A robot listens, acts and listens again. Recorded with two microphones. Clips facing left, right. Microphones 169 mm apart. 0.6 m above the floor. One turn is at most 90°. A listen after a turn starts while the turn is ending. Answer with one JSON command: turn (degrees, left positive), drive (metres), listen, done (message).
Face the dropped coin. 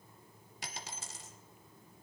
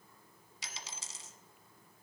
{"turn": 60}
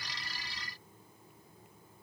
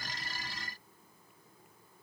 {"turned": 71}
{"listen": true}
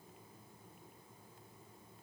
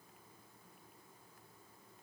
{"done": "I heard a dropped coin, but can't make it out now. It was about 15° right or 50° left."}